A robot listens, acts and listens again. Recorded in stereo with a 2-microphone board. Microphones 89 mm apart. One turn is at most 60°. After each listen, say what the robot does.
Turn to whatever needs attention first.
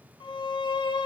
Keep listening.
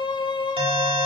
Turn 60° right.
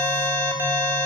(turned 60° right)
Turn 30° right.
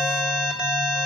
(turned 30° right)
Turn 10° right.
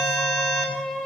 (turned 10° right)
Found it: an alarm, straight ahead.